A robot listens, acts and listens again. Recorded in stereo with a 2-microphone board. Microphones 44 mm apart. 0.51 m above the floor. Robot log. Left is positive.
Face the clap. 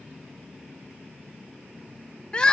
cmd idle
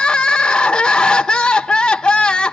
cmd idle
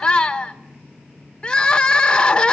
end: I can't make out a clap to turn to.